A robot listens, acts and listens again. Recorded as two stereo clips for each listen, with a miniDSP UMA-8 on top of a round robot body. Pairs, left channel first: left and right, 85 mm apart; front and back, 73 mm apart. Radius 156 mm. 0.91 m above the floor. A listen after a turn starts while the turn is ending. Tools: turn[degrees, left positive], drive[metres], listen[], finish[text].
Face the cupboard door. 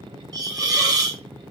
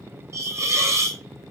Action: listen[]
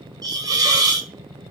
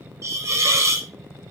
Action: listen[]
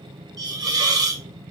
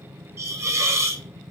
Action: finish[I can't make out a cupboard door to turn to.]